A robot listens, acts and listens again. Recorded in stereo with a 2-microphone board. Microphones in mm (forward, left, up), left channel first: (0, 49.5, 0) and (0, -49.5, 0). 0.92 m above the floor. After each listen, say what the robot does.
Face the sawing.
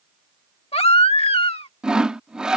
Turn 30° right.
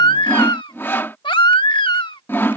Turn 25° left.
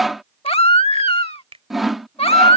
Found it: sawing, straight ahead.